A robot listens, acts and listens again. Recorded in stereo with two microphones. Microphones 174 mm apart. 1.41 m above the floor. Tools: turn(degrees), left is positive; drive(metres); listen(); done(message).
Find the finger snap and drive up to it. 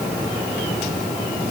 listen()
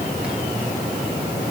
listen()
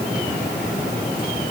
done("I can't make out a finger snap.")